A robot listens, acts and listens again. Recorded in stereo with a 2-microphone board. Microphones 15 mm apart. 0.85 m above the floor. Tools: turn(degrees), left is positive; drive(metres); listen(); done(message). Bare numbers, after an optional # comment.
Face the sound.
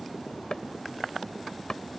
# The chopping: about 50° left or 130° left.
turn(50)
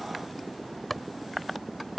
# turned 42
done("Found it: chopping, straight ahead.")